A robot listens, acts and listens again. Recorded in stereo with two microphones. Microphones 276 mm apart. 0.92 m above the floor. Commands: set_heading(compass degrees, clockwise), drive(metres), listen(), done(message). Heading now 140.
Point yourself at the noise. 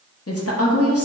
set_heading(80)
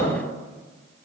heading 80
listen()
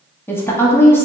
set_heading(70)
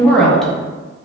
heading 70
done("Found it: a woman speaking, straight ahead, under 1 m away.")